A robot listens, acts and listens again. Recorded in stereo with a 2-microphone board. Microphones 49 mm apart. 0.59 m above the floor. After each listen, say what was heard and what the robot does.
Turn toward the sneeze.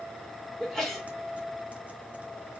Turn 30° left.
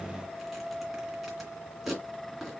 Keep listening.
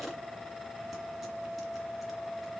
I heard a sneeze, but can't make it out now. It was about 25° right or 145° left.